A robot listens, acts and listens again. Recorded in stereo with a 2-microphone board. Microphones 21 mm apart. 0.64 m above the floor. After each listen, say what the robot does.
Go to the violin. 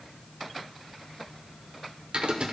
Keep listening.
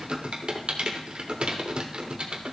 Keep listening.
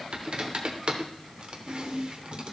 I can't make out a violin, only typing on a keyboard.